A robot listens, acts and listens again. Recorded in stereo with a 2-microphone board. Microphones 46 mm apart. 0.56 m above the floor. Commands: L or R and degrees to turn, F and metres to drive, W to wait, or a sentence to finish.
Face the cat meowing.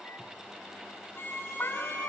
L55
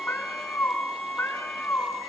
L55
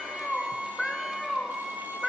Found it: a cat meowing, straight ahead, over 4 m away.